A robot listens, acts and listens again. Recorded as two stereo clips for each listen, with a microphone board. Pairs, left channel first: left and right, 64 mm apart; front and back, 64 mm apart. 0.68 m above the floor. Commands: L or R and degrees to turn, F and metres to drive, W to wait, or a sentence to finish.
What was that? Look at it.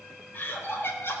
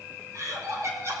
L145
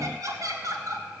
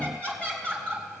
R70
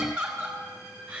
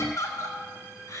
R15
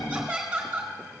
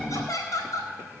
Found it: laughter, straight ahead.